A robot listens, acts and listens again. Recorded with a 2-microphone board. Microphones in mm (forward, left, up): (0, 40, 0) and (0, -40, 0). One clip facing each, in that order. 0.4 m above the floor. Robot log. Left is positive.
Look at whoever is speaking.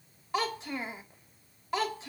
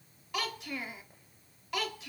note: The child speaking: about 30° left or 150° left.
cmd yaw +30
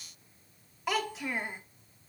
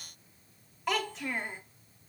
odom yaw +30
end: Facing the child speaking.